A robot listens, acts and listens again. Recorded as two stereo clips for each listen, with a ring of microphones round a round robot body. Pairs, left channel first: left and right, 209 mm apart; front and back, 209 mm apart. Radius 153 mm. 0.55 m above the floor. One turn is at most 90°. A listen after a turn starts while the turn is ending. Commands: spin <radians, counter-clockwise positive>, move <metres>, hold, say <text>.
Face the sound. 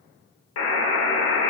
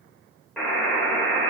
spin 1.57
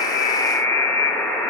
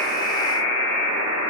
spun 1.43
spin 0.17
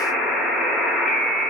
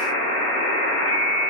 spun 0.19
say Found it: a buzzer, straight ahead, under 1 m away.